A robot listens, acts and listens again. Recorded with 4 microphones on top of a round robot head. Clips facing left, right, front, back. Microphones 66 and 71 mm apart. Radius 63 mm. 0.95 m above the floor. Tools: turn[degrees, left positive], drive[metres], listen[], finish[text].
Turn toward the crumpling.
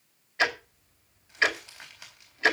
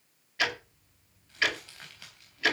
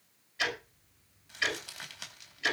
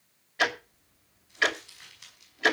Thought: The crumpling: 15° left.
Action: turn[15]
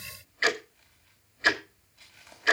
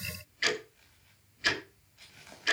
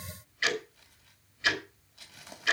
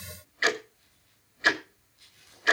Action: finish[Facing the crumpling, over 4 m away.]